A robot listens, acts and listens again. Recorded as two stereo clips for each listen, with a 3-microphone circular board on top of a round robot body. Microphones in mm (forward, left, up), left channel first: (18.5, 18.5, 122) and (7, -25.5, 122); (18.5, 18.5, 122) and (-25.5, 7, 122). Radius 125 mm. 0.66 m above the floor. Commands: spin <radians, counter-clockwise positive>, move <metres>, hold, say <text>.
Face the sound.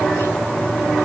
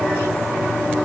hold
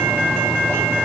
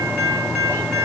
hold
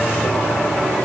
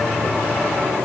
say I can't make out anything to turn to.